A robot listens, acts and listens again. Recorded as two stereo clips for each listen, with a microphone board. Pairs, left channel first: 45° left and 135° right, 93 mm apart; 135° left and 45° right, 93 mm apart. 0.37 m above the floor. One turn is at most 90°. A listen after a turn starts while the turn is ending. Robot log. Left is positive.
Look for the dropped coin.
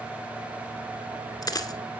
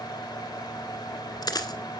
note: The dropped coin: 90° left.
cmd yaw +90
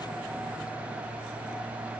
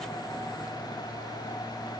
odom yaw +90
end: Facing where the dropped coin came from. I can't hear it now.